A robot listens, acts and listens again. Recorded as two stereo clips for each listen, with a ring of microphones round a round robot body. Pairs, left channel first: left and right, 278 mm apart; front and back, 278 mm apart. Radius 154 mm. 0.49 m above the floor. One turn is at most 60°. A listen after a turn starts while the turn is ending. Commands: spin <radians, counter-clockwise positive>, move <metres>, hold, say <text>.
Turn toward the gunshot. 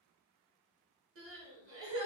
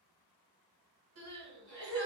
hold
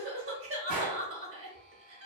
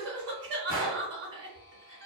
spin -1.05
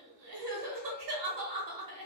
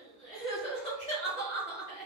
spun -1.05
spin -0.70
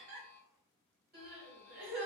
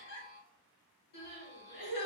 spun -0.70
say Facing where the gunshot came from. I can't hear it now.